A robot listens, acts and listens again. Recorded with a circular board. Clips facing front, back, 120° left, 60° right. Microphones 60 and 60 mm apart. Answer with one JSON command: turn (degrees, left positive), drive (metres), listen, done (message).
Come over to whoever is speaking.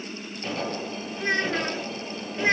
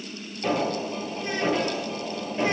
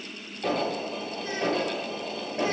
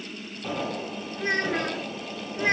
{"turn": -35}
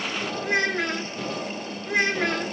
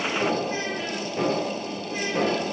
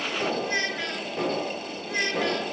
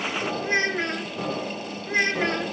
{"drive": 1.0}
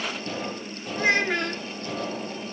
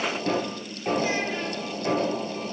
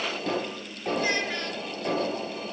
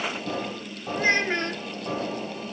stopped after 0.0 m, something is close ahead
{"done": "Something is in my way. I am facing the child speaking but have not reached it."}